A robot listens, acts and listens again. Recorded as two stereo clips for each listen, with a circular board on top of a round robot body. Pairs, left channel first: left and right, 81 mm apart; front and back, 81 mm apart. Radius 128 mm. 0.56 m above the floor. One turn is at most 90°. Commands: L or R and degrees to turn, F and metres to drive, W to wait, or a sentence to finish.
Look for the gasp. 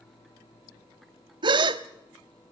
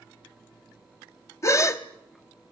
R60
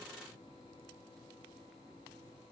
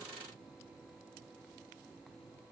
I heard a gasp from this way, but can't make it out now.